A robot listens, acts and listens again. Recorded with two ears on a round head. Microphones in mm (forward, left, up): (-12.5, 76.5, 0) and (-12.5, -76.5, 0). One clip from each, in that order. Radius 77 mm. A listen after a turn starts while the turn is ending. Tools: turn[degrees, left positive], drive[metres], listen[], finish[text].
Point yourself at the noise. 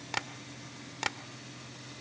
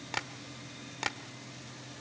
Action: turn[30]
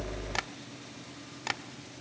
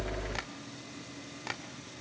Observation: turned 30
Thought: So it is at 140° left.
Action: turn[140]
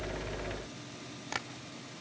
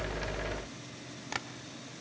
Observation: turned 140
Action: finish[Found it: tapping, straight ahead.]